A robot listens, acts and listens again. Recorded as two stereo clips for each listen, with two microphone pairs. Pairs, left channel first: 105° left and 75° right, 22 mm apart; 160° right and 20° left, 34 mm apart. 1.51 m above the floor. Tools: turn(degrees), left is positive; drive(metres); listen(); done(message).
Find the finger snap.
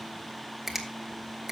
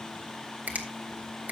done("Facing the finger snap, 1 to 2 m away.")